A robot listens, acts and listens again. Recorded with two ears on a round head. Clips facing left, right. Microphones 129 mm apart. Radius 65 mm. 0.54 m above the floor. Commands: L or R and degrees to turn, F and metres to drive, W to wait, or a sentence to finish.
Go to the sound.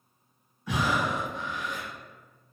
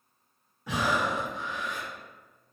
R70
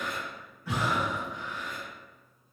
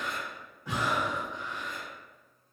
R20
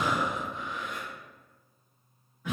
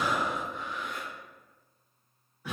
F1.0
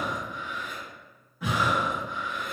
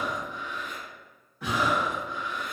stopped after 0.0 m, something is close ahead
Blocked. The breathing is further on, straight ahead.